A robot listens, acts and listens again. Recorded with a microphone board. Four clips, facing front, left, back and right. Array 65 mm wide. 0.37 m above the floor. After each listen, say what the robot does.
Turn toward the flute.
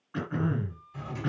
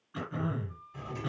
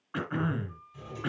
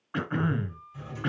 Turn 165° right.
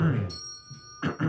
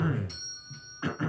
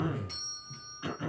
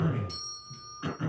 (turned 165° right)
Keep listening.
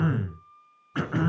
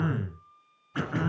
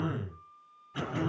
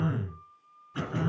Turn 20° right.
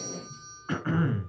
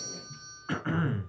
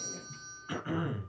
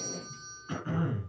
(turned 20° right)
Keep listening.
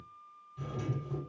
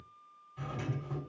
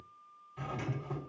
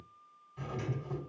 Turn 10° right.
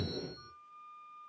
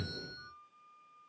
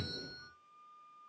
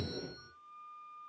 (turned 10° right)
Facing the flute.